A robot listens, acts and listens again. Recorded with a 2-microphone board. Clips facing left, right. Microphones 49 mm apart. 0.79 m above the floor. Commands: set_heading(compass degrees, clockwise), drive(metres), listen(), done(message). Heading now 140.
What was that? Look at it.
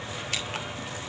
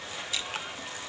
set_heading(75)
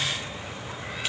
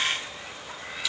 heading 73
listen()
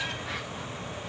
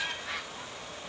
listen()
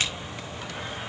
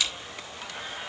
set_heading(28)
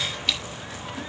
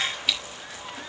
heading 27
done("Facing the scissors, over 4 m away.")